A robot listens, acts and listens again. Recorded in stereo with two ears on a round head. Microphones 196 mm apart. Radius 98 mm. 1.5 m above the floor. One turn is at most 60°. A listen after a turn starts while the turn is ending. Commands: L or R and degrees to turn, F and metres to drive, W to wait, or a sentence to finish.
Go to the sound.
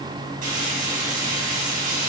R40
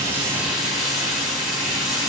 F1.0
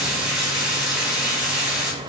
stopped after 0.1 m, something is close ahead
Blocked. The frying is further on, straight ahead.